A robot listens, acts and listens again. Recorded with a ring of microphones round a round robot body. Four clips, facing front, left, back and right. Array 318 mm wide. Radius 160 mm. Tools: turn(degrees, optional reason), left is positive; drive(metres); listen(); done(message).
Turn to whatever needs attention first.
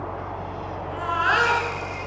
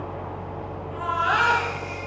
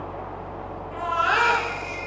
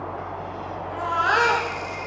turn(degrees=-75, reason="The baby crying: 75° right.")
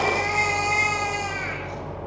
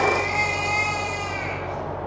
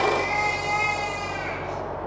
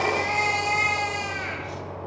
turn(degrees=-15, reason="The baby crying is now 15° right.")
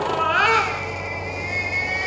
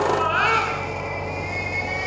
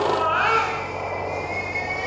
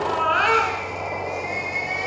done("Found it: a baby crying, straight ahead, over 4 m away.")